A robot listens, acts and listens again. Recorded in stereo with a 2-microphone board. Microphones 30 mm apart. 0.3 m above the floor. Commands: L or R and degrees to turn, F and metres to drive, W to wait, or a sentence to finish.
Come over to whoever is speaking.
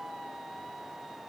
W
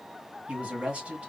R45
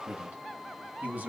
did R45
R80
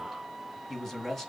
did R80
L10
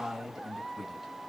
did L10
F1.0
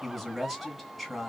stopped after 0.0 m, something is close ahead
Something is in my way. I am facing the man speaking but have not reached it.